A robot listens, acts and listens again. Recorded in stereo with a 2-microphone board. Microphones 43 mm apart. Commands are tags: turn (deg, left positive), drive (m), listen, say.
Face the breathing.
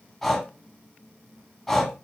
<turn deg="30"/>
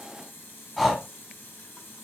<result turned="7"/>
<turn deg="30"/>
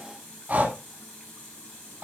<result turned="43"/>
<turn deg="-40"/>
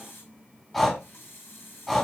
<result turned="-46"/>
<say>Found it: breathing, straight ahead.</say>